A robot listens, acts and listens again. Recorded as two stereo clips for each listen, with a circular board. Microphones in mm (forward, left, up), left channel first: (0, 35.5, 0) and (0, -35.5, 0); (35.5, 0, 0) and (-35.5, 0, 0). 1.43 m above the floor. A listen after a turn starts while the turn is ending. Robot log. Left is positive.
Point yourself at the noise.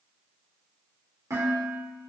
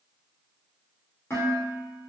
note: The dishes clattering: 55° right.
cmd yaw -55
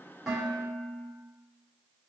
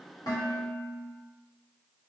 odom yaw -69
note: The dishes clattering is now 15° left.
cmd yaw +15
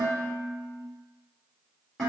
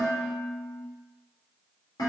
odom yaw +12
end: Found it: dishes clattering, straight ahead, 1 to 2 m away.